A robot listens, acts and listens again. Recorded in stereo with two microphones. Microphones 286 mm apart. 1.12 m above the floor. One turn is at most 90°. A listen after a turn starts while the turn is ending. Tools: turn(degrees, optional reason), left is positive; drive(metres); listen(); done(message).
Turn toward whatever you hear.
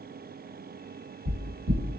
turn(degrees=-70, reason="The knocking: about 70° right or 110° right.")
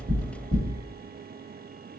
done("Found it: knocking, straight ahead, 1 to 2 m away.")